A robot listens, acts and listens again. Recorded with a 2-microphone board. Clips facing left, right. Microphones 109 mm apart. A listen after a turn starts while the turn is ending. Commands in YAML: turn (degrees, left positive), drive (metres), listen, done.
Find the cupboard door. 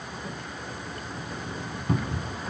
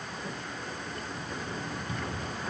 turn: 50
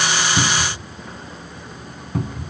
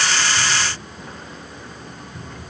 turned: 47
turn: 85
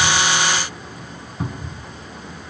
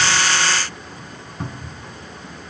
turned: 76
done: "Facing the cupboard door."